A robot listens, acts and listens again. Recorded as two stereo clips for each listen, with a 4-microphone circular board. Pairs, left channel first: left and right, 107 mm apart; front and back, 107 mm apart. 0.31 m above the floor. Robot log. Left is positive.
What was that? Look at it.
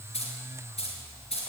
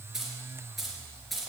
note: The keys jangling: 85° left.
cmd yaw +85
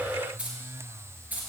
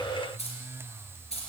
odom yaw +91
note: The keys jangling is now 15° right.
cmd yaw -15
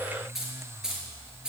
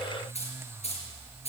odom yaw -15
note: The keys jangling is now 10° right.
cmd yaw -10
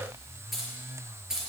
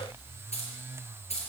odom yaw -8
end: Found it: keys jangling, straight ahead, over 4 m away.